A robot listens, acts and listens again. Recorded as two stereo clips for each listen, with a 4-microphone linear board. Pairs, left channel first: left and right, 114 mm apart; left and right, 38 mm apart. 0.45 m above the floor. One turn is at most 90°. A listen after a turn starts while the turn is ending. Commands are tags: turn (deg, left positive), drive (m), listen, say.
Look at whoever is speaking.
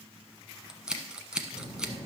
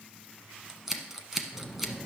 <turn deg="-75"/>
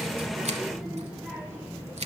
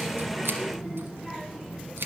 <turn deg="-15"/>
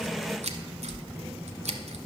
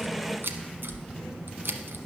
<turn deg="-15"/>
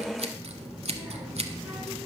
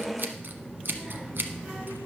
<say>Found it: a child speaking, straight ahead.</say>